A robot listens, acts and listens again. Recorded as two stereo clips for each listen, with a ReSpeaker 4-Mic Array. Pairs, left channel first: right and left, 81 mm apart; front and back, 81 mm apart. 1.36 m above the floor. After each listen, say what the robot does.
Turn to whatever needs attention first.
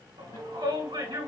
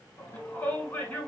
Turn 70° left.
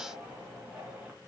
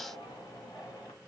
Turn 25° left.
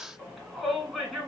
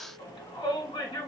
Found it: a shout, straight ahead.